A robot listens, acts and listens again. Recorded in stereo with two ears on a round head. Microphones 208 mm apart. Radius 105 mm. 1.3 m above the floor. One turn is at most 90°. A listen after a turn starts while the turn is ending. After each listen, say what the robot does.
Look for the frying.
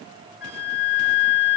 Keep listening.
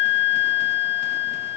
Keep listening.
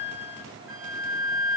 I can't make out frying to turn to.